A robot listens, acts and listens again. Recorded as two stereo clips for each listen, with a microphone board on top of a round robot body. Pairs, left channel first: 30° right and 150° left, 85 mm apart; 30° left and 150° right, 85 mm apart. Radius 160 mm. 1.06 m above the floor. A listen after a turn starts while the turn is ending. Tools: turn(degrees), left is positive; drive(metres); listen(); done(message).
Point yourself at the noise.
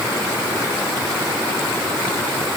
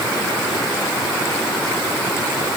listen()
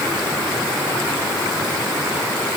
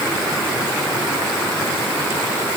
listen()
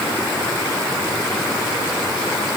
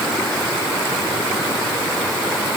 done("I can't make out anything to turn to.")